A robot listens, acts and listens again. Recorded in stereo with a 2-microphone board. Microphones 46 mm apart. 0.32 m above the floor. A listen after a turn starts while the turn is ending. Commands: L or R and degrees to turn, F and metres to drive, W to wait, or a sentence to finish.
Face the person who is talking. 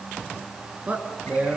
R30
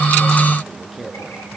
Facing the man speaking, over 4 m away.